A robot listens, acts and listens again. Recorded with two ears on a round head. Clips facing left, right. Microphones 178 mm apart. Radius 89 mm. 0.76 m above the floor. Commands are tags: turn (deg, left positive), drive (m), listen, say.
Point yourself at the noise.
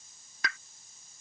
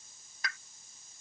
<turn deg="55"/>
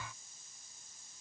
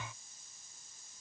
<listen/>
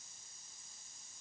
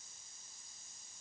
<say>I heard a pop, but can't make it out now. It was about straight ahead or 70° left.</say>